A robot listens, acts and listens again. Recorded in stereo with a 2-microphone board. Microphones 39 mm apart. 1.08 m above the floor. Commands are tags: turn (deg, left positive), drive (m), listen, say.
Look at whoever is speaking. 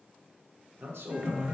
<turn deg="-90"/>
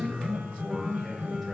<listen/>
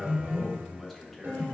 <say>Facing the man speaking.</say>